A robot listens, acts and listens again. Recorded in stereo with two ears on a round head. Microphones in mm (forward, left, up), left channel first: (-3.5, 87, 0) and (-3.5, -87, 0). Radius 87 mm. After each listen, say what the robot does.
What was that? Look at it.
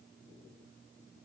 Keep listening.
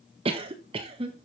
Turn 30° right.
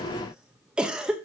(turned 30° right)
Found it: a cough, straight ahead.